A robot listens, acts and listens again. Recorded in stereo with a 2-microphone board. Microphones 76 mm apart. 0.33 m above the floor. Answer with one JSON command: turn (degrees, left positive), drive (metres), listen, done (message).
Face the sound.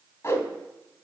{"turn": 35}
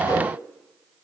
{"listen": true}
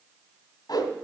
{"turn": 105}
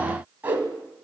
{"turn": -25}
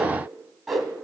{"done": "Facing the whoosh, 1 to 2 m away."}